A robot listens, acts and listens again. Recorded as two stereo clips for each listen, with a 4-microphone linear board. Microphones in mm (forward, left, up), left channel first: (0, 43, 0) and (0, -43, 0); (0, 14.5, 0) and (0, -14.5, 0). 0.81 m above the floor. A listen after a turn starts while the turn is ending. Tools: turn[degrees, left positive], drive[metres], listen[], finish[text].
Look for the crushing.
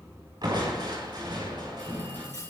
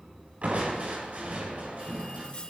Thought: The crushing: about 60° right or 120° right.
Action: turn[-60]
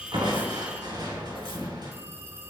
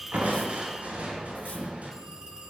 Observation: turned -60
Thought: So it is at 60° right.
Action: turn[-60]
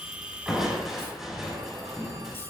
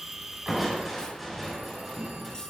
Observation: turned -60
Action: finish[Facing the crushing, over 4 m away.]